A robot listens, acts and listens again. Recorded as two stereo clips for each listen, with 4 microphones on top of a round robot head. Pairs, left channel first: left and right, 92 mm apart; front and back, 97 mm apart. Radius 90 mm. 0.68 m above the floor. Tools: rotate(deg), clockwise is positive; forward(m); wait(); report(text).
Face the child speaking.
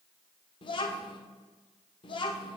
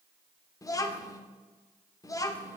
rotate(-55)
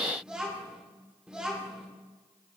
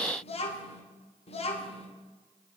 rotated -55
report("Facing the child speaking, 1 to 2 m away.")